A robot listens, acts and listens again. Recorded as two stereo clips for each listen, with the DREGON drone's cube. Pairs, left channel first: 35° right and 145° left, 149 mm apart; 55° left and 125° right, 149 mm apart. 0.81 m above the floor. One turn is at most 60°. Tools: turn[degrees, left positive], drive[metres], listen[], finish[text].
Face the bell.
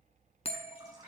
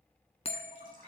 Thought: The bell: 10° left.
Action: turn[10]
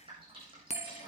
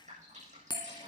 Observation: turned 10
Action: finish[Facing the bell, 1 to 2 m away.]